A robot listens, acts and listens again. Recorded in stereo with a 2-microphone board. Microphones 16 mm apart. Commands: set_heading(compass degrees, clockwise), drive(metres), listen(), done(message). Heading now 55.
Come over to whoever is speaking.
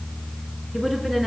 set_heading(25)
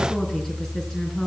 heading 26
set_heading(251)
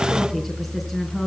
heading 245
drive(1.0)
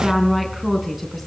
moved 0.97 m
drive(1.0)
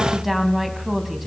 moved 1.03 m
set_heading(260)
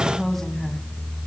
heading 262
drive(1.0)
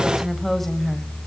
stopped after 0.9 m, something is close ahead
set_heading(252)
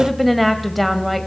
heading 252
done("Arrived at the woman speaking, straight ahead.")